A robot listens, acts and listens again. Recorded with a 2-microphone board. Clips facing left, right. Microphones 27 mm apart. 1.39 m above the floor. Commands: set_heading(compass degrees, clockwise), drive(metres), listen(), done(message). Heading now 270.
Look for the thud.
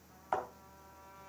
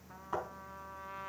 set_heading(180)
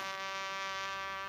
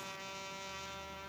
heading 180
done("Facing where the thud came from. I can't hear it now.")